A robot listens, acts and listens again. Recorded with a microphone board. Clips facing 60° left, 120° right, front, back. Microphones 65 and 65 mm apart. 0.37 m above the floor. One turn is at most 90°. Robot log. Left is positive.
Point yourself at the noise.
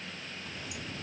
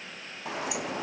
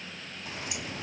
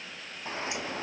note: The sliding door: 120° right.
cmd yaw -90
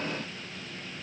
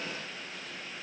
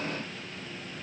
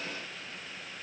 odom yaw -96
note: Nothing new. It was at 25° right.
cmd yaw -25
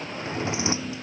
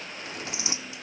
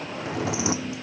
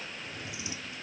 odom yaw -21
end: Facing the sliding door.